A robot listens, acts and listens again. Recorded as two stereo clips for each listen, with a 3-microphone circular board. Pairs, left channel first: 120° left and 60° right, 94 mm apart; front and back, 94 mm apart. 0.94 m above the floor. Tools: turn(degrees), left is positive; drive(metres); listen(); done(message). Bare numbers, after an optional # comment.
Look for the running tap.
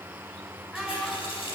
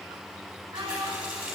# The running tap: 100° left.
turn(100)
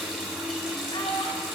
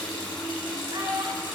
# The running tap is now 25° left.
turn(25)
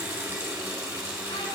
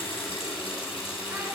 done("Facing the running tap, over 4 m away.")